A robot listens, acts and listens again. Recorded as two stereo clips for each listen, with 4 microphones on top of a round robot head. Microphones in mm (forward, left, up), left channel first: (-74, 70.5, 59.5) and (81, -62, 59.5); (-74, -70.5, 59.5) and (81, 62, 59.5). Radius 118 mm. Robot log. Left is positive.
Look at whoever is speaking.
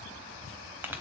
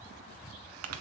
cmd idle
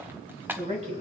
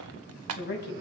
note: The woman speaking: 100° right.
cmd yaw -100
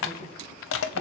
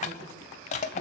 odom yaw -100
cmd idle
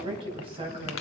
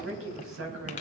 note: The woman speaking is now 25° left.
cmd yaw +25
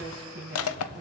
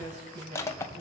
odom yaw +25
end: Facing the woman speaking.